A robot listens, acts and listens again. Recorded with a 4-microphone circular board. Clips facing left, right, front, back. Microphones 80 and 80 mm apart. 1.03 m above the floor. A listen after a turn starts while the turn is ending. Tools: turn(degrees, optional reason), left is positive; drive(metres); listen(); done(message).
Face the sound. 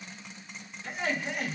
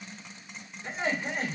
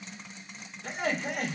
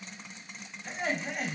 turn(degrees=-35, reason="The laughter: 35° right.")
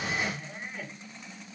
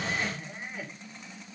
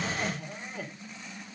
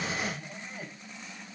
turn(degrees=-10, reason="The laughter is now 10° right.")
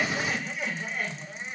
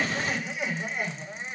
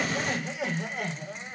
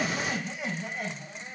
turn(degrees=-20, reason="The laughter is now 20° right.")
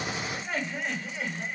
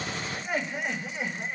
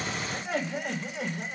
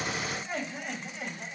turn(degrees=-20, reason="The laughter is now 20° right.")
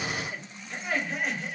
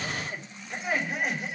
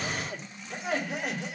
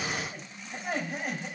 turn(degrees=-10, reason="The laughter is now 10° right.")
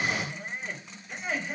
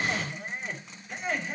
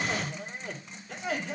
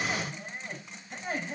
done("Facing the laughter, 2 to 4 m away.")